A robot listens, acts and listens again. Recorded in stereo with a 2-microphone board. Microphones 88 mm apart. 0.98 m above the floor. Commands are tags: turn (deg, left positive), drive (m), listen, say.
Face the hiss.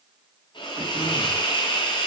<turn deg="60"/>
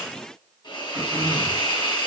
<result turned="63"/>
<turn deg="55"/>
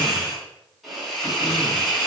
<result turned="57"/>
<say>Facing the hiss.</say>